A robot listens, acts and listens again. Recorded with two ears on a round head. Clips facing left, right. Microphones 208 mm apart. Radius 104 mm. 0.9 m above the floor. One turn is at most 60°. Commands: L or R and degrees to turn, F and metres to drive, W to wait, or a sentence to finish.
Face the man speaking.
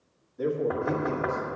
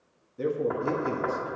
R40
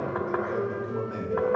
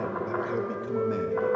W
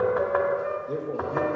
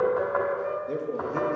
R30
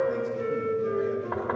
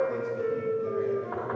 W
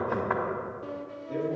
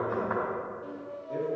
L20
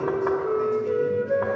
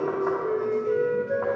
W
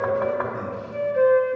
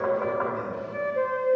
W
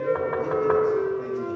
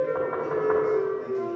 Facing where the man speaking came from. I can't hear it now.